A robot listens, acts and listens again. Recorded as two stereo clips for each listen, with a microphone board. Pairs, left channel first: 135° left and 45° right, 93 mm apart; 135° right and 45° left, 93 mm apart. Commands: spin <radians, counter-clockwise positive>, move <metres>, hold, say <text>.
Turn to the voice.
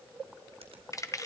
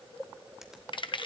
hold
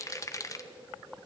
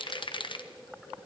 hold
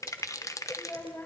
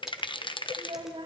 spin 1.22
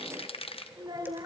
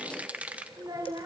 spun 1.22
say Facing the child speaking, 2 to 4 m away.